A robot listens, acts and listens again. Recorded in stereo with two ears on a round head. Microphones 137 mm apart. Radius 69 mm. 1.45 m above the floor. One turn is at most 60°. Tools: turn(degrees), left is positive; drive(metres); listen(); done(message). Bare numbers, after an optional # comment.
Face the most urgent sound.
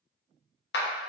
listen()
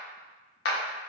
listen()
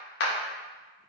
done("I can't make out anything urgent to turn to.")